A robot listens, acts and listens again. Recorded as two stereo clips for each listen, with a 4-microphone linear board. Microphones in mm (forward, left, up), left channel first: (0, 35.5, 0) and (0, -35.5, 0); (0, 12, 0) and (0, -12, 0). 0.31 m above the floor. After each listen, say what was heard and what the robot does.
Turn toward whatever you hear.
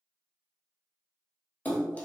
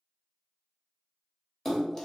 The splash: about 25° left or 155° left. Turn 25° left.
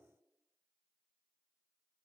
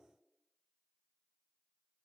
Keep listening.
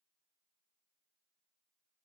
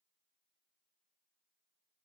I heard a splash, but can't make it out now. It was about straight ahead or 130° left.